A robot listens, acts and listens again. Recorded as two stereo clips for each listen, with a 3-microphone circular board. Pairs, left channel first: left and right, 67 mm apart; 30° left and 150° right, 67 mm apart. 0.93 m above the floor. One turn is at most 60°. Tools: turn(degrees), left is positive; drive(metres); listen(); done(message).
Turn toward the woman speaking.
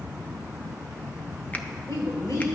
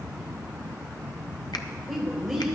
turn(degrees=60)
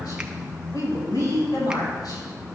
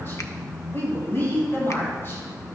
turn(degrees=60)
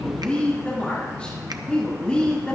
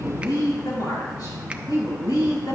turn(degrees=20)
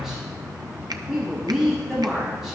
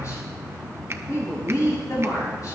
done("Facing the woman speaking.")